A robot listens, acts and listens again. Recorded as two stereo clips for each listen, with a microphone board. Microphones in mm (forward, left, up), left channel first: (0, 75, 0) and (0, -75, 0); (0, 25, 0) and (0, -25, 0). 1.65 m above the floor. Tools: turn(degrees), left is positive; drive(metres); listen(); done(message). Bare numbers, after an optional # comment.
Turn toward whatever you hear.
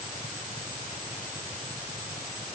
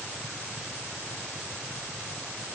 listen()
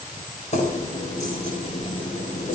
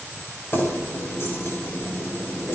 # The keys jangling: about 50° left or 130° left.
turn(50)
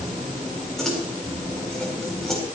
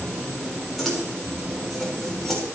done("Found it: keys jangling, straight ahead, over 4 m away.")